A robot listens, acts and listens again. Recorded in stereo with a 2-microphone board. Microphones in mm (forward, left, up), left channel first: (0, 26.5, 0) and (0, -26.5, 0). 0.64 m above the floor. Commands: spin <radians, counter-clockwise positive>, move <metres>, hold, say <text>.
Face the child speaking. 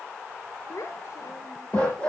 spin 1.22
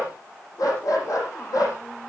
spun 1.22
hold
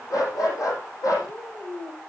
spin 1.22
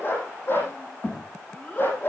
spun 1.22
spin 0.52
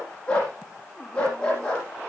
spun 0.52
hold
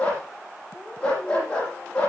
hold
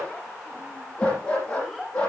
say Facing the child speaking.